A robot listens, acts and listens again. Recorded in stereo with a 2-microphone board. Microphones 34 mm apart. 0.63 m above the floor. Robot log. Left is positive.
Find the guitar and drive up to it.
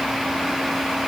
cmd idle
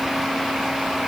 cmd idle
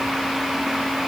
end: I can't make out a guitar.